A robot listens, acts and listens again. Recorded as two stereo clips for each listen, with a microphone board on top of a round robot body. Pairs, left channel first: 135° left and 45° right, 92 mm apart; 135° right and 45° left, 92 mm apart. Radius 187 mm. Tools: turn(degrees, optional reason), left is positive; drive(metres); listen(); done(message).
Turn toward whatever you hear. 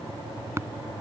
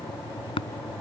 turn(degrees=-110, reason="The tapping: 110° right.")
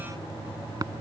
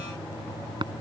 done("Facing the tapping.")